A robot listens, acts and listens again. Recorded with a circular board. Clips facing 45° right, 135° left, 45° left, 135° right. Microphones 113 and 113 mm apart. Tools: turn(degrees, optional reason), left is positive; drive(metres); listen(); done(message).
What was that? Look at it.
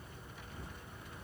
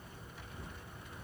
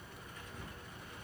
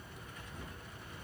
listen()
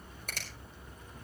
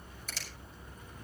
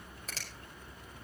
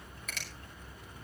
turn(degrees=-10, reason="The finger snap: 10° right.")
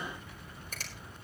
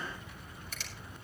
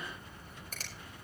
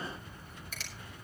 listen()
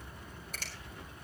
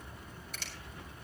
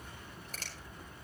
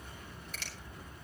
done("Found it: a finger snap, straight ahead, over 4 m away.")